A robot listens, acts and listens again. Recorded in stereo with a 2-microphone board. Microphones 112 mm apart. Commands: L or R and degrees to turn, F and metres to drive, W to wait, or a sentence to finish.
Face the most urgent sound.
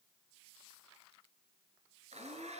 W
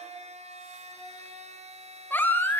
L20
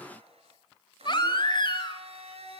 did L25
L135
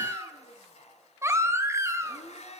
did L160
R25
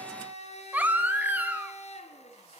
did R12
R15
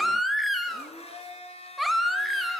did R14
Found it: a baby crying, straight ahead, 1 to 2 m away.